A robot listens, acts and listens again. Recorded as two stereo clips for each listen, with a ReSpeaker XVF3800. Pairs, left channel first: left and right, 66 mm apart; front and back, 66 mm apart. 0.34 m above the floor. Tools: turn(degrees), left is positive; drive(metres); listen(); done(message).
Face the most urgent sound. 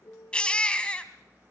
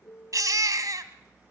turn(degrees=165)
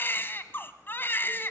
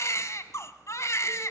turn(degrees=35)
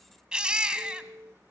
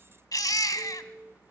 turn(degrees=-15)
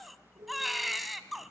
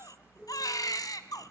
done("Facing the baby crying, 1 to 2 m away.")